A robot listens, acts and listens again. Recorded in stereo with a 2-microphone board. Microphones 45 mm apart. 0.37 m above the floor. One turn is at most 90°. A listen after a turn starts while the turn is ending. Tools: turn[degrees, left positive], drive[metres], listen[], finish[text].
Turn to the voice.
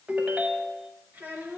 Thought: The child speaking: about 40° right or 140° right.
Action: turn[-40]
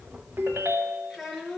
Action: finish[Found it: a child speaking, straight ahead.]